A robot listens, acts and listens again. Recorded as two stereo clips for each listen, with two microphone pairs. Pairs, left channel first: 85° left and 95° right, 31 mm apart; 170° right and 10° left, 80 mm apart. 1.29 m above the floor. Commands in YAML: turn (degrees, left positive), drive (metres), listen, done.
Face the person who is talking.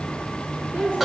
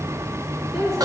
turn: -80
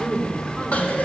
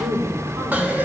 done: "Found it: a woman speaking, straight ahead, over 4 m away."